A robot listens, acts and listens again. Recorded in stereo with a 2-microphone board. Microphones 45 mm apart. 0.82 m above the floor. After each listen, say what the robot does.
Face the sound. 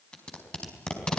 Turn 20° left.
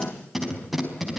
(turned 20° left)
Found it: tape being pulled, straight ahead, over 4 m away.